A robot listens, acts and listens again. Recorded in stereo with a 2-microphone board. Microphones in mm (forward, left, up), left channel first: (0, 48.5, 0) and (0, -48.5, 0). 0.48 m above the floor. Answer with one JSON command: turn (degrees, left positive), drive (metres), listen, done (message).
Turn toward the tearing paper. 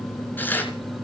{"turn": 20}
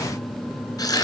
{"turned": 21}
{"turn": 140}
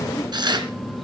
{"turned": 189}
{"turn": -50}
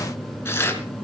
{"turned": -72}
{"turn": 25}
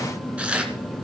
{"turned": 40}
{"turn": -10}
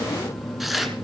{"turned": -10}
{"done": "Facing the tearing paper, 2 to 4 m away."}